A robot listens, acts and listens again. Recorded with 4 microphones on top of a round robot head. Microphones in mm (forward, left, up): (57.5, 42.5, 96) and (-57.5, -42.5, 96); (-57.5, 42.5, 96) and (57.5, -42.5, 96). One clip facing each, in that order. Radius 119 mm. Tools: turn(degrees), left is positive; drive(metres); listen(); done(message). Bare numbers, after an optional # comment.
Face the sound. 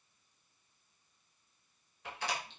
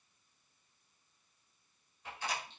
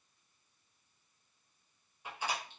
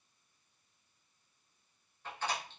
# The door slam: 65° left.
turn(65)
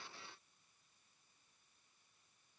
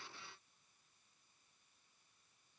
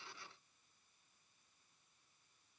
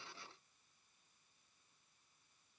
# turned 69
done("I heard a door slam from this way, but can't make it out now.")